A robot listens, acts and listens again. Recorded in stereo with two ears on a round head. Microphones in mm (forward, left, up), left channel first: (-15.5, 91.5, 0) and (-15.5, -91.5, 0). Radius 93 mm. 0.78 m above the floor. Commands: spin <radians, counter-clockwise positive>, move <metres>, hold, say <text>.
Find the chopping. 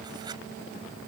hold
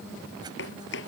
spin 0.96
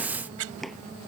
hold
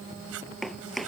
say Found it: chopping, straight ahead.